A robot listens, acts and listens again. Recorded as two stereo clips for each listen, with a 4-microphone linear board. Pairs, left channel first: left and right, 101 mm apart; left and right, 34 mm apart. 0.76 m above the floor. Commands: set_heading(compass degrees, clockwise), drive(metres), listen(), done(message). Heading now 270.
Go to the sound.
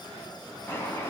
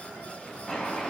set_heading(245)
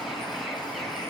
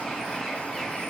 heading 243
drive(1.0)
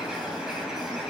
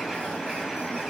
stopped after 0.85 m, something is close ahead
done("Blocked. The bird is further on, straight ahead.")